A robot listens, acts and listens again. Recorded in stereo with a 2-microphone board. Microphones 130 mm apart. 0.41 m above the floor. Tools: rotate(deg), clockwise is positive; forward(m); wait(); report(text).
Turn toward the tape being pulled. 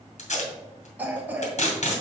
rotate(-60)
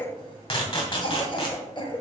rotate(-50)
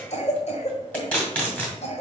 rotate(-15)
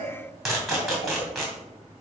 report("Found it: tape being pulled, straight ahead, 2 to 4 m away.")